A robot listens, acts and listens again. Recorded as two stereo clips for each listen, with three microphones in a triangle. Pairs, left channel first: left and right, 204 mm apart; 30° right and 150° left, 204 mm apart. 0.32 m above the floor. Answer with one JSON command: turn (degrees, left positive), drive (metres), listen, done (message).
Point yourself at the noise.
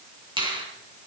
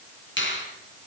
{"turn": -25}
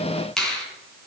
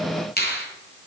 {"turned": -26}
{"done": "Facing the finger snap, 2 to 4 m away."}